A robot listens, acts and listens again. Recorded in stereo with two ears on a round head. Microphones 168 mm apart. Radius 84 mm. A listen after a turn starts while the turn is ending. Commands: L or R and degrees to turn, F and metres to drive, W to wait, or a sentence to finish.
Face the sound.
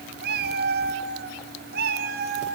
R55
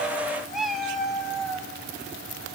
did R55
Found it: a cat meowing, straight ahead, 2 to 4 m away.